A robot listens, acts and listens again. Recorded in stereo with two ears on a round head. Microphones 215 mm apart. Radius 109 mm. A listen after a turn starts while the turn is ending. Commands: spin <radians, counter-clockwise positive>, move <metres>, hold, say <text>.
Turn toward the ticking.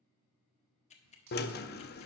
spin 0.52
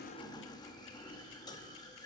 hold
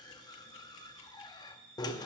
hold
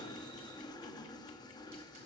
say I heard ticking, but can't make it out now. It was about straight ahead or 120° left.